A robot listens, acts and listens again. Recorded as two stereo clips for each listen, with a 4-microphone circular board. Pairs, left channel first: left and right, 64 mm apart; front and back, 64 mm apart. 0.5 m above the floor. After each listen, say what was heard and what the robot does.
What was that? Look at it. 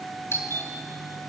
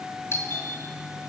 The doorbell: 45° left. Turn 45° left.
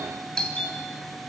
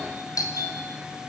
The doorbell is now 15° left. Turn 15° left.
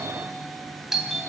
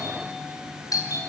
Found it: a doorbell, straight ahead, 2 to 4 m away.